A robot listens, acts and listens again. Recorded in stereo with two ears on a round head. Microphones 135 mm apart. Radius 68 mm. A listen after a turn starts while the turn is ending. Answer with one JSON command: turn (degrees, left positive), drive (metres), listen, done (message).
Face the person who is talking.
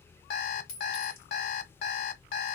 {"listen": true}
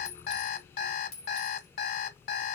{"listen": true}
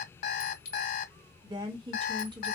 {"turn": -35}
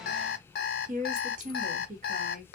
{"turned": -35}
{"turn": -105}
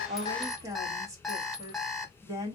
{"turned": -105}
{"turn": -25}
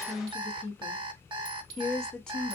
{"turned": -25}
{"done": "Facing the woman speaking."}